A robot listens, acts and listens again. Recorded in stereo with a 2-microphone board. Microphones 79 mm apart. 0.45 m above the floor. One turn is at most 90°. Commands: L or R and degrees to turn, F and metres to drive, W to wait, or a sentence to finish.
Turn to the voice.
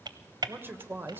R25
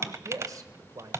R90
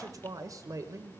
R60
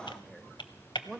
Found it: a man speaking, straight ahead.